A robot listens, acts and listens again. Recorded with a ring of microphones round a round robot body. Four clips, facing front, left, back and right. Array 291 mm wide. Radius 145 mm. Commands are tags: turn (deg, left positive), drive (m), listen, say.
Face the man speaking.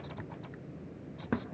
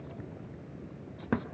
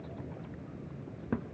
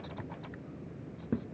<listen/>
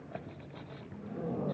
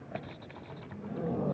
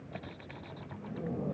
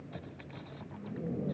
<listen/>
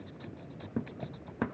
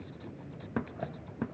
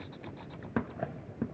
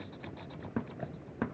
<say>I can't make out a man speaking to turn to.</say>